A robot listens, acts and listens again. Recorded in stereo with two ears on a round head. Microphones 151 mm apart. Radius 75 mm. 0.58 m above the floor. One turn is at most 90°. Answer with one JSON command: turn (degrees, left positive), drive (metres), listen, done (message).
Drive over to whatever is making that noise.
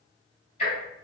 {"turn": 40}
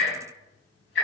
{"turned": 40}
{"turn": 90}
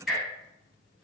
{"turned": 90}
{"drive": 1.0}
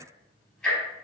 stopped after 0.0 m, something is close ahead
{"done": "Something is in my way. I am facing the ticking but have not reached it."}